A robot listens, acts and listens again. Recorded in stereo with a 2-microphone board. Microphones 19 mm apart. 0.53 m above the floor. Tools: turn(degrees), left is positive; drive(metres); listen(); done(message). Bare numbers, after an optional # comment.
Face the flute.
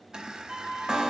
# The flute: about 55° right or 125° right.
turn(-55)
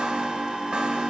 listen()
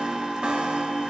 listen()
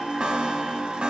done("I heard a flute, but can't make it out now. It was about straight ahead or 70° right.")